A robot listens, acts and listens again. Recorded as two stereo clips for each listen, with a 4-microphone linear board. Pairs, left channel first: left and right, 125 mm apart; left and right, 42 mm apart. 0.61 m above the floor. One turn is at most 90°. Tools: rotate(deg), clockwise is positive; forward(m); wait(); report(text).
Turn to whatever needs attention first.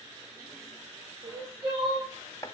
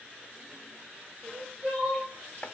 rotate(30)
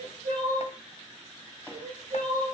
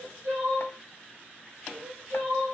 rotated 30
rotate(90)
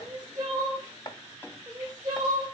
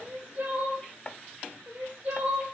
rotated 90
rotate(30)
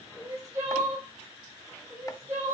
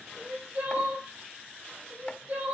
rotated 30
rotate(25)
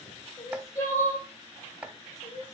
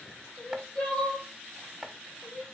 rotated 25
rotate(-15)
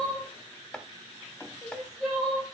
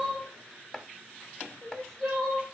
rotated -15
report("Found it: crying, straight ahead.")